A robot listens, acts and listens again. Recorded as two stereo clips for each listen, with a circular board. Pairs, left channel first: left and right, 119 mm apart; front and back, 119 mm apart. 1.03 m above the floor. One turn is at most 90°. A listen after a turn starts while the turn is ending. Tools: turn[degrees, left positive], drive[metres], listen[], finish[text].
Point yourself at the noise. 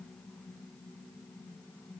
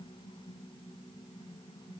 Action: listen[]
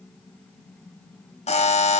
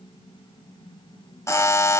Thought: The buzzer: 65° left.
Action: turn[65]
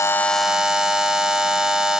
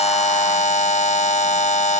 Action: finish[Facing the buzzer.]